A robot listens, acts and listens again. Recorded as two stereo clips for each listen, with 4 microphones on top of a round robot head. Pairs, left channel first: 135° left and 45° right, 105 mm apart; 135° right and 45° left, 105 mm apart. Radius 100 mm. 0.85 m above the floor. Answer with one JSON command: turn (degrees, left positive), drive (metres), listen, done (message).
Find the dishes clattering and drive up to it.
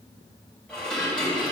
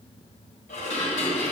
{"turn": -140}
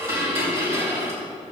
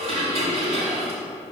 {"turn": 20}
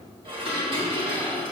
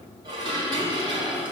{"drive": 1.0}
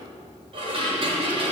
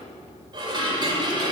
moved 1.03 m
{"drive": 1.0}
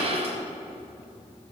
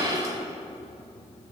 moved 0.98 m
{"turn": -15}
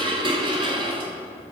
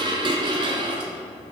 {"drive": 1.0}
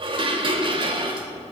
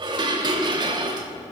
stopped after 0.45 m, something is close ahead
{"done": "Arrived at the dishes clattering, straight ahead."}